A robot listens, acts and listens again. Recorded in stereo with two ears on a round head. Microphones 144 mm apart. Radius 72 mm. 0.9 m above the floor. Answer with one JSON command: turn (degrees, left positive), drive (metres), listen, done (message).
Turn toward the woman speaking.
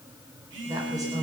{"turn": -25}
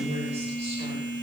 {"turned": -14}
{"turn": -40}
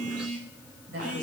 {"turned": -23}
{"turn": -110}
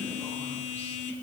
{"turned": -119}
{"turn": 10}
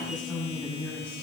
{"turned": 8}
{"done": "Facing the woman speaking, over 4 m away."}